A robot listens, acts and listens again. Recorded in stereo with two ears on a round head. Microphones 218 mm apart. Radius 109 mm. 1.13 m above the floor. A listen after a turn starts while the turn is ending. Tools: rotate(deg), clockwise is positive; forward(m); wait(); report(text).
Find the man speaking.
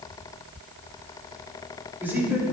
rotate(30)
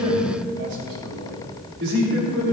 rotate(120)
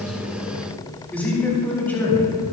rotate(-10)
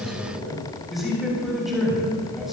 report("Facing the man speaking, over 4 m away.")